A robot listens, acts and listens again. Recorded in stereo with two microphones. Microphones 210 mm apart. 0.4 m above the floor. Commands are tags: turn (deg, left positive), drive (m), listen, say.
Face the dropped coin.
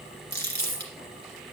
<turn deg="-90"/>
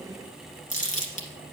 <say>I heard a dropped coin from this way, but can't make it out now.</say>